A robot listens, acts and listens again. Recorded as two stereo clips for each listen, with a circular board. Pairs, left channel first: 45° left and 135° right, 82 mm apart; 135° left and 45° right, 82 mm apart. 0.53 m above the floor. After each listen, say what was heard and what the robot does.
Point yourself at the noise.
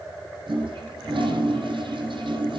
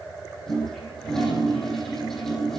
The toilet flushing: 140° right. Turn 140° right.
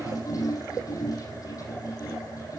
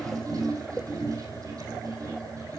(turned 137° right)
Facing the toilet flushing, over 4 m away.